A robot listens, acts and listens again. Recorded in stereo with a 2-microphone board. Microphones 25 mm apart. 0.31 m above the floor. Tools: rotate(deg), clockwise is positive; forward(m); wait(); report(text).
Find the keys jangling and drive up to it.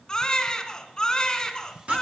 wait()
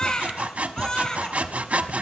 wait()
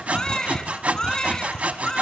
report("I can't make out keys jangling to turn to.")